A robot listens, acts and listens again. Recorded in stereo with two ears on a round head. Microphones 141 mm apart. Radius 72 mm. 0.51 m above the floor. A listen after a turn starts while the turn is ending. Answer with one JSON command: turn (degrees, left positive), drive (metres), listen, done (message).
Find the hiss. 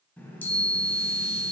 {"listen": true}
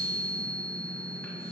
{"listen": true}
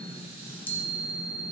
{"done": "I can't make out a hiss to turn to."}